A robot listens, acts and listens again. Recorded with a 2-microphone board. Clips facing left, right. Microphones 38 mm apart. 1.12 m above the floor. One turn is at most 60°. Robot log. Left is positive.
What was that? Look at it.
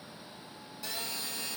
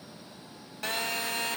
note: The phone buzzing: about 60° right or 120° right.
cmd yaw -60
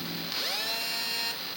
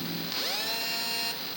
end: Found it: a phone buzzing, straight ahead.